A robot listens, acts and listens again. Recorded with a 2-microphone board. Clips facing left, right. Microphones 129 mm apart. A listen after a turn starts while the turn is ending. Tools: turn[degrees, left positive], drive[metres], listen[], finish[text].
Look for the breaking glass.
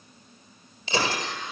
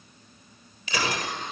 Thought: The breaking glass: about 30° left or 150° left.
Action: turn[30]
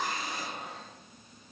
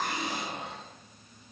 Action: listen[]
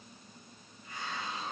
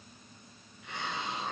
Action: finish[I heard breaking glass, but can't make it out now. It was about straight ahead or 120° left.]